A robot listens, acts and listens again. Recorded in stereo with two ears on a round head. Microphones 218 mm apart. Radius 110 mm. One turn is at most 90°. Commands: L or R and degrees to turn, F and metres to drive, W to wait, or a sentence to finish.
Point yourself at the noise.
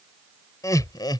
L20
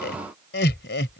L90
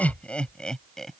Found it: laughter, straight ahead.